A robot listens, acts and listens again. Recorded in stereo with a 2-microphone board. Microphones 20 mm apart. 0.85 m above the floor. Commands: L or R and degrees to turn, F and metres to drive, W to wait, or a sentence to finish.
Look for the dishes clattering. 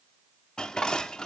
L35
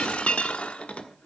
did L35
L110
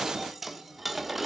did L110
Facing the dishes clattering, 1 to 2 m away.